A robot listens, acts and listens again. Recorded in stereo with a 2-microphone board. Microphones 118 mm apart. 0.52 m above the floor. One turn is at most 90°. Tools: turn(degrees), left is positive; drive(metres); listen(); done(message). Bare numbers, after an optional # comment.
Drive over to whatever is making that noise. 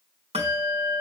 # The bell: about 55° right or 125° right.
turn(-55)
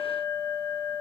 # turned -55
drive(1.0)
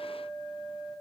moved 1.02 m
drive(1.0)
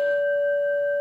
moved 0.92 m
drive(1.0)
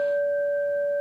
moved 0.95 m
drive(1.0)
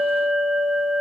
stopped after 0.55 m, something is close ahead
# The bell is now 10° right.
turn(-10)
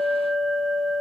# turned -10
done("Arrived at the bell, straight ahead.")